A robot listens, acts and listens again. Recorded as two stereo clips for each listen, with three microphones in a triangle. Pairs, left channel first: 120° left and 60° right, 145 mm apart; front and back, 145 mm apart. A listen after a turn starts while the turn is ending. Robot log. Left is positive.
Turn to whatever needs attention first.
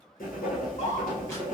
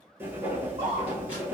note: The scream: 140° left.
cmd yaw +140
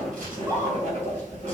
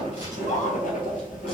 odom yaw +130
note: The scream is now 10° left.
cmd yaw +10
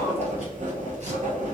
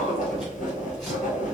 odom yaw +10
cmd idle
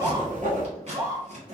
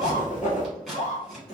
end: Found it: a scream, straight ahead.